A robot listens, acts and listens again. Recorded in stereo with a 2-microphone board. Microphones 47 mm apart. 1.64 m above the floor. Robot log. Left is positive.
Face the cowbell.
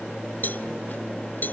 note: The cowbell: about 40° left or 140° left.
cmd yaw +40
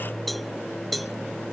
end: Found it: a cowbell, straight ahead.